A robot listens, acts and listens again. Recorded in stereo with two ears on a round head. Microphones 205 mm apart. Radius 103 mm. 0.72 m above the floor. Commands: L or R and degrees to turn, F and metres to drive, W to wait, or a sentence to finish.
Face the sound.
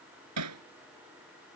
R90
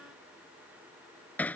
Found it: hammering, straight ahead.